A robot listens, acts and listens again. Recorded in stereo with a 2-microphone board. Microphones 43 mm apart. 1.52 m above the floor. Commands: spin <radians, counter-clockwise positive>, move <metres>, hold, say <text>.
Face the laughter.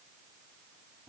hold
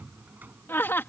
spin 1.05
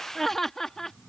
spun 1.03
spin 0.17
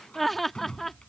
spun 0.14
say Facing the laughter.